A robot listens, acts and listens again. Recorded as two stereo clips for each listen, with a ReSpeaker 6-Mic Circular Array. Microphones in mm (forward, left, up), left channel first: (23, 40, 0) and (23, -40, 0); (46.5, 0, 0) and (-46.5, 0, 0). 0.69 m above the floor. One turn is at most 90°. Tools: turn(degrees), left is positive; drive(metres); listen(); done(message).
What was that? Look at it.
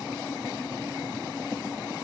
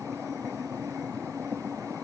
listen()
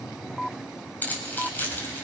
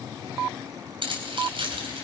turn(degrees=90)
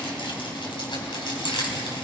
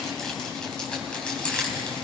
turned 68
turn(degrees=80)
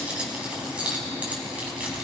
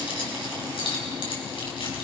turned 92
turn(degrees=-15)
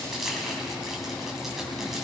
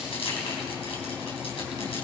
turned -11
done("Found it: keys jangling, straight ahead, over 4 m away.")